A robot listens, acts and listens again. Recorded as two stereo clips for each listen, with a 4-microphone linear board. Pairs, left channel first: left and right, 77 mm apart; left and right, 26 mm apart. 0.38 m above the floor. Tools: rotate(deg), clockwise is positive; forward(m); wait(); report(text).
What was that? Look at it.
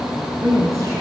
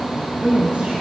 rotate(45)
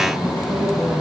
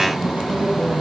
rotate(105)
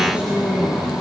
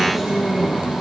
rotate(15)
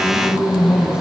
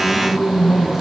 rotate(15)
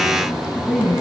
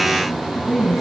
report("Found it: a woman speaking, straight ahead, 2 to 4 m away.")